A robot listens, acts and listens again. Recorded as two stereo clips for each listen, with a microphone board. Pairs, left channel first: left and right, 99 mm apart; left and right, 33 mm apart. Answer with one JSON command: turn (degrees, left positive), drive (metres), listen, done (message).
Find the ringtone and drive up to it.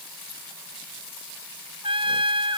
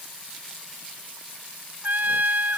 {"listen": true}
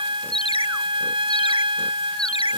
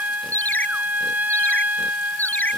{"turn": 70}
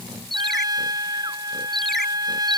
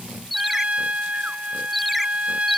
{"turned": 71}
{"drive": 1.0}
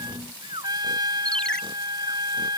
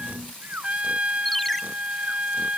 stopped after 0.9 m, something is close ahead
{"turn": 10}
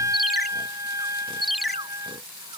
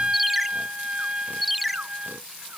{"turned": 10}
{"done": "Something is in my way. I am facing the ringtone but have not reached it."}